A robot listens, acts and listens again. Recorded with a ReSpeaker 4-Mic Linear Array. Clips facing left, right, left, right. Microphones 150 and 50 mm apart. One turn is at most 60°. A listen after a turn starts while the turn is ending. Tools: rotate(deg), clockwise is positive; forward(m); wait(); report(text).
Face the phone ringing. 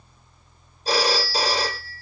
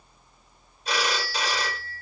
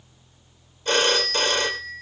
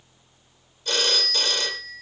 rotate(-35)
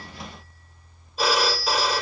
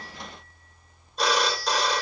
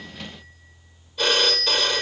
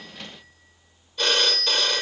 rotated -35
report("Facing the phone ringing.")